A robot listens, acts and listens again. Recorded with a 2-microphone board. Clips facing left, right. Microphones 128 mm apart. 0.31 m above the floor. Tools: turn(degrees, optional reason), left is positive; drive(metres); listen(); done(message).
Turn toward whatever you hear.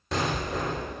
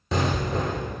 turn(degrees=30)
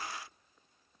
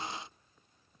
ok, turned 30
listen()
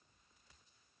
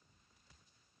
done("I heard an explosion, but can't make it out now. It was about 30° right or 150° left.")